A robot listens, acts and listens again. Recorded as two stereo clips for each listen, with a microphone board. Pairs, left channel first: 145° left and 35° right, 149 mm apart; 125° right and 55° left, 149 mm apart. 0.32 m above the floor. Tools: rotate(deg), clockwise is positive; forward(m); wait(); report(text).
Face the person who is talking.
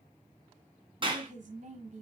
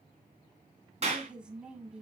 rotate(25)
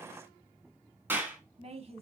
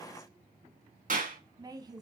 report("Found it: a woman speaking, straight ahead, 1 to 2 m away.")